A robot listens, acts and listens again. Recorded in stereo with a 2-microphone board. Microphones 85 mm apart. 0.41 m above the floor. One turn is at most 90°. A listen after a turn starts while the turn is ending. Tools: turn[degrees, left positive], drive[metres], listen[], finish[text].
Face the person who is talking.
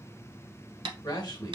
Thought: The man speaking: about 55° left or 125° left.
Action: turn[55]
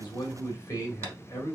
Thought: So it is at 45° left.
Action: turn[45]
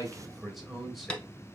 Action: finish[Facing the man speaking, 1 to 2 m away.]